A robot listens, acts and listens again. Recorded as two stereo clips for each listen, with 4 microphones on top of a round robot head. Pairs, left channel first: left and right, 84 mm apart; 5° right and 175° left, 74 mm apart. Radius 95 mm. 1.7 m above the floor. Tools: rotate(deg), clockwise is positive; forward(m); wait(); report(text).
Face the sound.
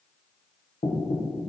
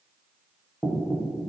rotate(-70)
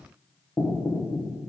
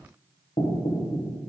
report("Facing the knocking.")